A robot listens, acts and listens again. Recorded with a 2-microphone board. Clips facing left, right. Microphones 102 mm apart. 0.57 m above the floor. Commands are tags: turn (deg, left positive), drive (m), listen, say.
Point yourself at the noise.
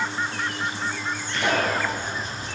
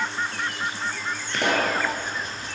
<turn deg="-60"/>
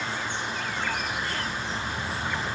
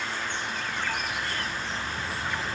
<listen/>
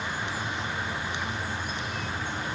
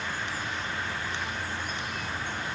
<say>I heard a pop, but can't make it out now. It was about straight ahead or 60° right.</say>